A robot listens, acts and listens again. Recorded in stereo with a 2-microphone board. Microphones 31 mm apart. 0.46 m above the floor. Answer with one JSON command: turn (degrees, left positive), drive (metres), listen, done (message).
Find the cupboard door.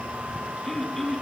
{"listen": true}
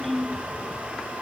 {"listen": true}
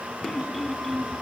{"done": "I can't make out a cupboard door to turn to."}